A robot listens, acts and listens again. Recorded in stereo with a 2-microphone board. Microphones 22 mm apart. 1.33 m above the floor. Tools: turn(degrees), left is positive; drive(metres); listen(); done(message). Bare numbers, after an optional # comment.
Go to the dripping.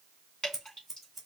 # The dripping: about 45° left or 135° left.
turn(45)
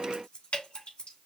# So it is at 90° left.
turn(90)
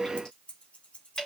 # The dripping is now 20° left.
turn(20)
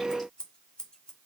listen()
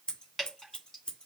drive(1.0)
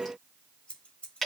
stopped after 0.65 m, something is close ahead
done("Blocked. The dripping is further on, straight ahead.")